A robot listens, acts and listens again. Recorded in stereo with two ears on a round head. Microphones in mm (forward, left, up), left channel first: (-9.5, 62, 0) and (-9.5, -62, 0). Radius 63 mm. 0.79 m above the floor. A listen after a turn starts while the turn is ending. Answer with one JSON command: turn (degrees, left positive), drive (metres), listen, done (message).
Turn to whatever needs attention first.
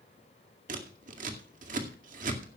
{"listen": true}
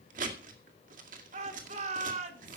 {"turn": -55}
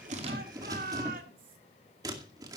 {"turn": -70}
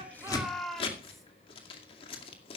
{"done": "Facing the shout, 2 to 4 m away."}